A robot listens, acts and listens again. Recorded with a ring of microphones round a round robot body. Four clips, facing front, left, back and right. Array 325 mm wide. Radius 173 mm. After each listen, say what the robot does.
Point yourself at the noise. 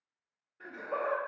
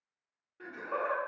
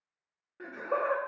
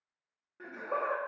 Turn 160° right.
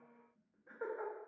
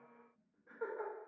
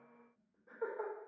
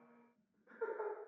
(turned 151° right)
Turn 25° left.
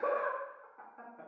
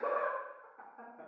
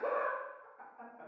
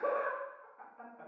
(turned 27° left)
Turn 15° left.
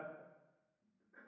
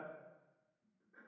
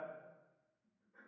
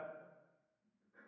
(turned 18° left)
Keep listening.
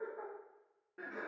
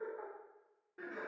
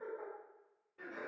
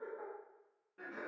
Turn 15° left.
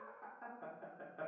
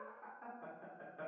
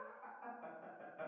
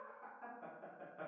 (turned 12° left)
Found it: laughter, straight ahead, 2 to 4 m away.